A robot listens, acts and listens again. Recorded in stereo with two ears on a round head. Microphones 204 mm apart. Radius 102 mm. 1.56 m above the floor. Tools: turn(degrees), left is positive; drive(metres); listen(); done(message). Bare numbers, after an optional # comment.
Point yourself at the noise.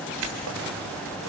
turn(-90)
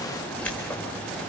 done("Facing the keys jangling, 2 to 4 m away.")